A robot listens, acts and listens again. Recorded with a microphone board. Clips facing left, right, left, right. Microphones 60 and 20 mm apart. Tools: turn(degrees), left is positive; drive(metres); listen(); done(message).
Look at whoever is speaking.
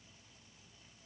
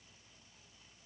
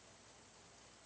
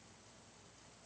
listen()
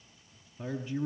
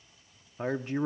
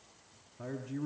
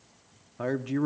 turn(degrees=-55)
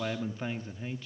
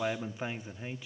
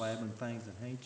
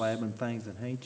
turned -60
turn(degrees=-15)
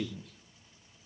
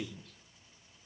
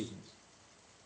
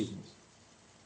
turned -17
done("Facing the man speaking.")